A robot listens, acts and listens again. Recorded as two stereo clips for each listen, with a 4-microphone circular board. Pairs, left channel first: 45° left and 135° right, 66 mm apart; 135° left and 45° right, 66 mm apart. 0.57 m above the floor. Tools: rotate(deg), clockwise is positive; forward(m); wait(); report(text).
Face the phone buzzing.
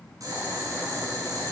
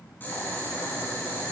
wait()
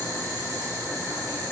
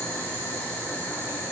wait()
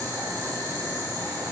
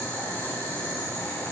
report("I can't make out a phone buzzing to turn to.")